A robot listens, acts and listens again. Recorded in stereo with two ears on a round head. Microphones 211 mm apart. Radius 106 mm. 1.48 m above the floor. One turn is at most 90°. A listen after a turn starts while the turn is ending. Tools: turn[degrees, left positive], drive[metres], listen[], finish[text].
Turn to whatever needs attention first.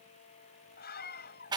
Thought: The scream: about 45° left or 135° left.
Action: turn[45]
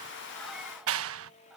Action: listen[]
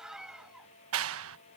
Action: finish[Found it: a scream, straight ahead.]